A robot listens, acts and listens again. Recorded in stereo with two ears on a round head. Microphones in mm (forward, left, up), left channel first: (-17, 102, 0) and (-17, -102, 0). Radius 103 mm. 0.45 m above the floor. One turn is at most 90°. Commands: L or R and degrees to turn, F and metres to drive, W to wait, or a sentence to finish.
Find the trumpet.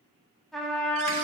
L30
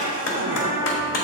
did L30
L90
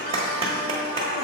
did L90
L60
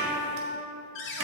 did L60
R10
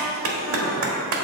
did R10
W
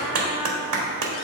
W
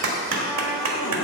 I heard a trumpet from this way, but can't make it out now.